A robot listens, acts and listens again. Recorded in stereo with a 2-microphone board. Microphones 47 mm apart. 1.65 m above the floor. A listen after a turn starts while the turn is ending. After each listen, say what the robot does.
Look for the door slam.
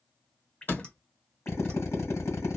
Turn 45° left.
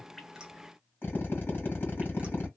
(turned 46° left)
Keep listening.
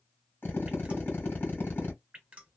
I heard a door slam, but can't make it out now. It was about straight ahead or 90° left.